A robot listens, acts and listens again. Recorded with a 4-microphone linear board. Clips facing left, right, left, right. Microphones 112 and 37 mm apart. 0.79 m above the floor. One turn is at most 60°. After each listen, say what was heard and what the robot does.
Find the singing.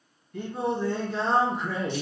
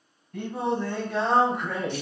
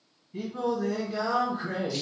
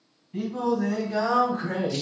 The singing: about 75° right or 105° right. Turn 60° right.
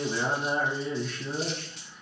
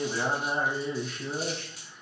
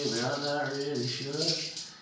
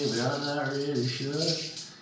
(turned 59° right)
Found it: singing, straight ahead.